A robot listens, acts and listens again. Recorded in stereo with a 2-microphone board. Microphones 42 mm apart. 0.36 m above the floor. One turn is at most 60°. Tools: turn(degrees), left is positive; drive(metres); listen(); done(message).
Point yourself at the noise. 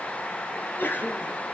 turn(degrees=50)
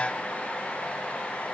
listen()
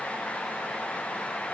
done("I heard a sneeze, but can't make it out now. It was about straight ahead or 80° left.")